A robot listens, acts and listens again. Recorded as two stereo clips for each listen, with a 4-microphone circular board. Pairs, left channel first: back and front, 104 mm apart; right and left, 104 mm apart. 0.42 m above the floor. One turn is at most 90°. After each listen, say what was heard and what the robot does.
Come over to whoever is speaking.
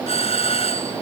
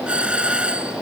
Keep listening.
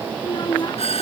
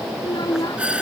The child speaking: 135° right. Turn 90° right.
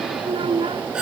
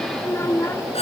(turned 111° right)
The child speaking is now 25° right. Turn 25° right.
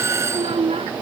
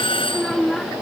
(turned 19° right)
Drive 1.0 m forward.
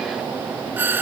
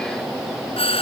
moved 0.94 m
Keep listening.
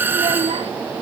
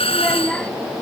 The child speaking is now 10° right. Turn 10° right.
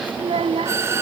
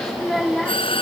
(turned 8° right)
Drive 1.0 m forward.
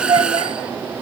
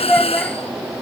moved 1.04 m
The child speaking is now 10° right. Turn 10° right.
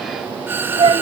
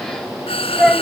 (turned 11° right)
Drive 1.0 m forward.
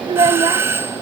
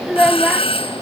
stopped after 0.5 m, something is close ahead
I am next to the child speaking.